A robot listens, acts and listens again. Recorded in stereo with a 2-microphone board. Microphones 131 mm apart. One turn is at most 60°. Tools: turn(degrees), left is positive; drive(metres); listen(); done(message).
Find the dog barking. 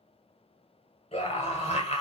listen()
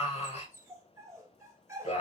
turn(degrees=-20)
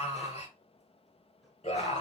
listen()
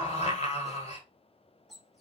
done("Found it: a dog barking, straight ahead.")